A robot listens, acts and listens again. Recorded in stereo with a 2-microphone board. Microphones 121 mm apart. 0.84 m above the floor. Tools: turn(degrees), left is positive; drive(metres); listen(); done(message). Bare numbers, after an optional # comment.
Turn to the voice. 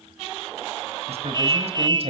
# The man speaking: about 55° right or 125° right.
turn(-55)
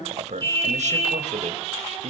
# So it is at 80° right.
turn(-80)
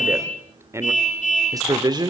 # The man speaking is now 35° right.
turn(-35)
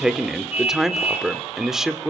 done("Found it: a man speaking, straight ahead.")